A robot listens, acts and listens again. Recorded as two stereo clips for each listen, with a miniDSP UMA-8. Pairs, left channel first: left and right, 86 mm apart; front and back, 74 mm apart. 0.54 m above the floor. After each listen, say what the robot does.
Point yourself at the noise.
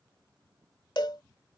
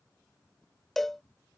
Turn 85° left.
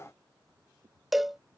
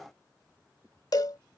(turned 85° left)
Facing the cowbell.